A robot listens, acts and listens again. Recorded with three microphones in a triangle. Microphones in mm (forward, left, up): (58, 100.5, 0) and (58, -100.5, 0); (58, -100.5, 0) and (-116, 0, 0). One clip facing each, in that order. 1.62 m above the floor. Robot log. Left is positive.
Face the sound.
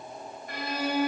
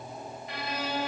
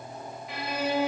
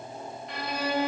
note: The violin: 55° left.
cmd yaw +55
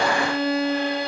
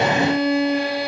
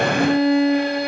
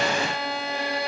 note: The violin is now 10° right.
cmd yaw -10
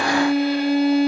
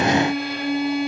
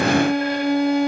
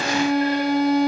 end: Facing the violin, under 1 m away.